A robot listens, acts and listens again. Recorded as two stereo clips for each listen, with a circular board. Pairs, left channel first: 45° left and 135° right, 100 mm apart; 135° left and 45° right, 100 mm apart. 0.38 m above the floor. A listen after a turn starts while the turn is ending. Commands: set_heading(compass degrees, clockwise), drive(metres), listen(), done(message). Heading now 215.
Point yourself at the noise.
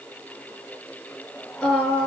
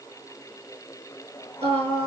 set_heading(255)
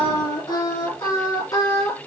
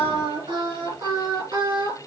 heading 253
done("Facing the singing, over 4 m away.")